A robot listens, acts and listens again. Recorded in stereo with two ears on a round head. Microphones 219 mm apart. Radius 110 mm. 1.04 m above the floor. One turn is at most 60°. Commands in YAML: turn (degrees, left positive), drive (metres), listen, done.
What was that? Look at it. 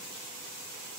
listen: true
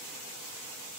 listen: true
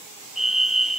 turn: 30
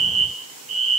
turn: -35
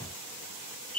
turn: 10
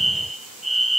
done: "Facing the fire alarm."